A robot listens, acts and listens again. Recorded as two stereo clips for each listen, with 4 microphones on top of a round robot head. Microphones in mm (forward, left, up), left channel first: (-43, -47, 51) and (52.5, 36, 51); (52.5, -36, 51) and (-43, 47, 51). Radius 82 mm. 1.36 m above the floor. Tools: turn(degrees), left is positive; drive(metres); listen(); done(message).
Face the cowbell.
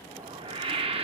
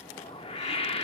listen()
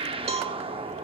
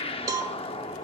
turn(degrees=80)
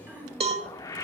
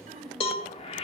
done("Found it: a cowbell, straight ahead, 1 to 2 m away.")